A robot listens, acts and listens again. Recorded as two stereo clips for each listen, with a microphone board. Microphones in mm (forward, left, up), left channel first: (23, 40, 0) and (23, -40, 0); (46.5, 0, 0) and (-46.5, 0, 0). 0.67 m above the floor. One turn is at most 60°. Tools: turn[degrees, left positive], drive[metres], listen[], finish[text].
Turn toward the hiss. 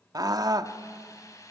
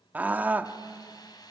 Thought: The hiss: 45° left.
Action: turn[45]
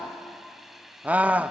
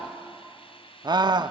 Action: finish[Facing the hiss, 2 to 4 m away.]